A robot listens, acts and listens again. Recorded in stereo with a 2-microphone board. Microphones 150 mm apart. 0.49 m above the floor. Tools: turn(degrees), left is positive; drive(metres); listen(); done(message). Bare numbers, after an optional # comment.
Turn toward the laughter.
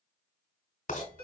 listen()
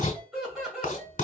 turn(-30)
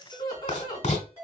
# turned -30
# So it is at 30° left.
turn(30)
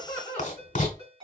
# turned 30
# The laughter is now 10° left.
turn(10)
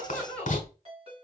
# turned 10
done("Found it: laughter, straight ahead, 1 to 2 m away.")